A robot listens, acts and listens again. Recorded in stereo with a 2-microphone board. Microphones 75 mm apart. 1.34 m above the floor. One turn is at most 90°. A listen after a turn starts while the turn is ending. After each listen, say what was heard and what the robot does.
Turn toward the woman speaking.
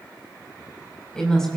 Turn 30° left.
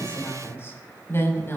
So it is at 150° left. Turn 90° left.
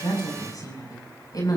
The woman speaking is now 60° left. Turn 60° left.
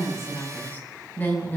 The woman speaking is now 25° left. Turn 25° left.
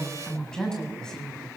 The woman speaking is now 10° left. Turn 10° left.
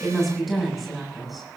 Found it: a woman speaking, straight ahead.